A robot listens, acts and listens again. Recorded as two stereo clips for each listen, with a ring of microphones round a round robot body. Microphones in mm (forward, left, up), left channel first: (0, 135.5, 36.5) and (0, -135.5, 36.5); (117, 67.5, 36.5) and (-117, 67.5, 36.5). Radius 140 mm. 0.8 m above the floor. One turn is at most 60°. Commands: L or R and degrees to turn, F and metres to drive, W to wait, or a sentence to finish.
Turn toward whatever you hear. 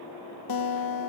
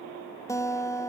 L60
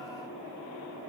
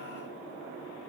L20
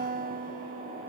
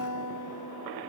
R30
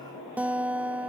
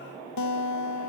Found it: a guitar, straight ahead, under 1 m away.